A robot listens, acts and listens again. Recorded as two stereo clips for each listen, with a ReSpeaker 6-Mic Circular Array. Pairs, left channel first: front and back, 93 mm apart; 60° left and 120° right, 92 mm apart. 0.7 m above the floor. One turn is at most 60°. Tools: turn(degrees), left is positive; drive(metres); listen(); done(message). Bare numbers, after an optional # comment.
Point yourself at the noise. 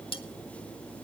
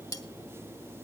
# The cutlery clinking: 10° left.
turn(10)
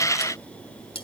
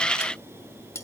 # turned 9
done("Found it: cutlery clinking, straight ahead, 1 to 2 m away.")